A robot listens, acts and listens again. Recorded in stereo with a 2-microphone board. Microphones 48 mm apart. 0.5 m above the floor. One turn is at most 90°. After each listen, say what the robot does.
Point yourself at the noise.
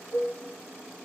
Turn 60° left.
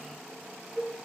Facing the dishes clattering.